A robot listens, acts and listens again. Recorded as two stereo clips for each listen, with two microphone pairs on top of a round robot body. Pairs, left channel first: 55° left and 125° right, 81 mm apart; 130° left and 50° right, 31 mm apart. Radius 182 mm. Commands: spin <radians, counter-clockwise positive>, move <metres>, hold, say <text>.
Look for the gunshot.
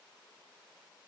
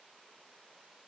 hold
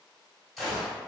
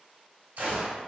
spin -0.61
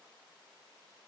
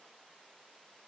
say I heard a gunshot from this way, but can't make it out now.